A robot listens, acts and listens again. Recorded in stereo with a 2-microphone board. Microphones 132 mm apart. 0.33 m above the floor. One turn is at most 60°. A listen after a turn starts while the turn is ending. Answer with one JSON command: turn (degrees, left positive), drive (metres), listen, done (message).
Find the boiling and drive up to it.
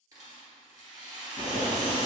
{"turn": -60}
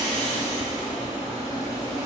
{"turn": -35}
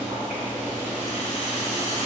{"turn": -15}
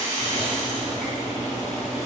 {"drive": 1.0}
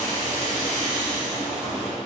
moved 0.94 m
{"turn": -10}
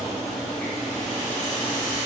{"drive": 1.0}
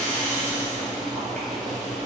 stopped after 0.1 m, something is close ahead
{"done": "I am next to the boiling."}